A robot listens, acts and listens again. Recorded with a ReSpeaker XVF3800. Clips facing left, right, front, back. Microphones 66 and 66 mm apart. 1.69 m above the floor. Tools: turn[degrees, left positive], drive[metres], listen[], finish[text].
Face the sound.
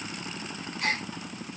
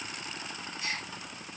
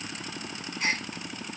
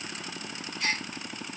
Thought: The gasp: 60° left.
Action: turn[60]
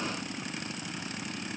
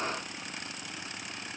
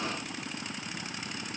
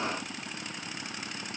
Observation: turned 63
Action: finish[Facing where the gasp came from. I can't hear it now.]